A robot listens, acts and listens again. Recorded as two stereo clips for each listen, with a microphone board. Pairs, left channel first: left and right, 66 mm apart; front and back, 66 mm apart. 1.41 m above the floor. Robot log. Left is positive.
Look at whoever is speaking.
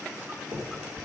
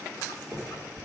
cmd idle
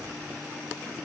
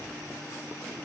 cmd idle
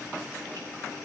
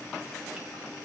end: I can't make out anyone speaking to turn to.